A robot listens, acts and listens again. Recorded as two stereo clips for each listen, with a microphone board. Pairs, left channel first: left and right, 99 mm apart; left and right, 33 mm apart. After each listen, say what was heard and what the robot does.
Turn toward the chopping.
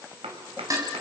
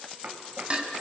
Turn 90° right.
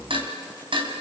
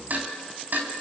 Keep listening.
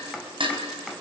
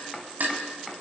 Found it: chopping, straight ahead, 2 to 4 m away.